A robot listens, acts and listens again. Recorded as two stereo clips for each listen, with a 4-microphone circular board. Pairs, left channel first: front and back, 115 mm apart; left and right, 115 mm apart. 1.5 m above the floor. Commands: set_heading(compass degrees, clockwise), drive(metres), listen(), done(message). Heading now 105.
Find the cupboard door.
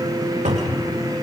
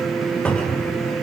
set_heading(295)
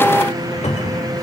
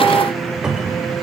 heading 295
done("Found it: a cupboard door, straight ahead, 2 to 4 m away.")